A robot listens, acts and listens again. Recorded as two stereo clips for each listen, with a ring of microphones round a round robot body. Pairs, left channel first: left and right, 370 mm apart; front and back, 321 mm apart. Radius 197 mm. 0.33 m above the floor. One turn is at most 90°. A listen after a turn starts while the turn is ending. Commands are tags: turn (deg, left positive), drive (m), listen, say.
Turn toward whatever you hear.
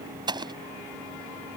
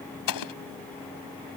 <turn deg="-10"/>
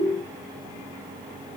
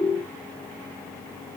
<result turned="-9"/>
<say>Facing where the explosion came from. I can't hear it now.</say>